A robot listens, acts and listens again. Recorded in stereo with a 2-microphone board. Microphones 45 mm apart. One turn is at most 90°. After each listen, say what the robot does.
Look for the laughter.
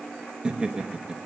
Turn 20° right.
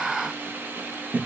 Turn 90° right.
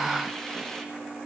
Turn 45° right.
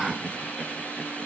Keep listening.
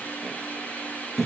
Facing the laughter.